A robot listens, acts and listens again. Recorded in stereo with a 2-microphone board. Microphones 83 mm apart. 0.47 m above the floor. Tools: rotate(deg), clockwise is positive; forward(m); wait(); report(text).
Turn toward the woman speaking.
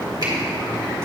wait()
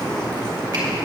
wait()
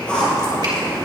report("I can't make out a woman speaking to turn to.")